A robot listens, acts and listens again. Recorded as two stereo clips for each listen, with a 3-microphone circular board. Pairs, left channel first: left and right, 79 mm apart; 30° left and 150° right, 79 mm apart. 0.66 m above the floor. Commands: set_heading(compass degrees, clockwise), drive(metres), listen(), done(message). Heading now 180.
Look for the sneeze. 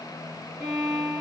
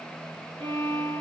listen()
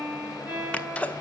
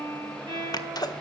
set_heading(160)
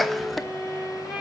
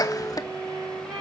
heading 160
done("Found it: a sneeze, straight ahead, under 1 m away.")